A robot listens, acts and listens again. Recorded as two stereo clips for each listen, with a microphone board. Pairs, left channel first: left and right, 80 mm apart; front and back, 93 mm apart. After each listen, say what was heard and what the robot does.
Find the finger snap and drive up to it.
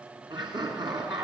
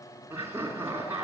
Keep listening.
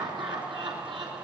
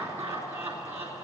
Keep listening.
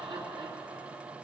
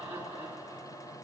I can't make out a finger snap to turn to.